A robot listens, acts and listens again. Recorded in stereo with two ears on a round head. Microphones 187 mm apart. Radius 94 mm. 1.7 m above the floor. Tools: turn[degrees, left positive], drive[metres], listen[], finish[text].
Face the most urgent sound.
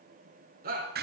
Thought: The shout: about 45° right or 135° right.
Action: turn[-45]
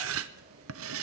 Action: listen[]
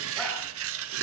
Action: listen[]
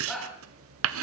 Action: finish[Found it: a shout, straight ahead.]